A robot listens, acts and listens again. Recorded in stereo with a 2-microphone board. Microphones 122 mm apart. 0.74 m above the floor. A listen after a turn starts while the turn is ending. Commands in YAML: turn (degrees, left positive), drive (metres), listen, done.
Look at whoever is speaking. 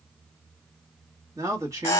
turn: -25
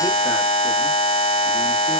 listen: true
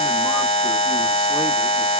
listen: true
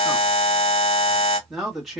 done: "Found it: a man speaking, straight ahead, 1 to 2 m away."